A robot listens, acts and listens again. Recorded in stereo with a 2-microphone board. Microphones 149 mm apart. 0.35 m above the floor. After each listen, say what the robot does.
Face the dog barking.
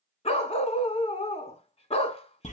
Turn 45° left.
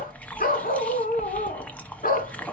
Turn 90° left.
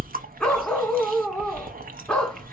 Facing the dog barking, 1 to 2 m away.